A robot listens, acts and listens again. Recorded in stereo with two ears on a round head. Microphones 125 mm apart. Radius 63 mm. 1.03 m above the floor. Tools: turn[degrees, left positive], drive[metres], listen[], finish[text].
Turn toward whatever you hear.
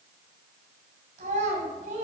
Thought: The child speaking: about 60° right or 120° right.
Action: turn[-60]
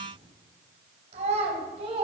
Thought: So it is at 45° right.
Action: turn[-45]
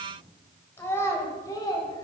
Thought: The child speaking is now 30° left.
Action: turn[30]
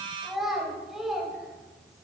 Action: finish[Facing the child speaking, 2 to 4 m away.]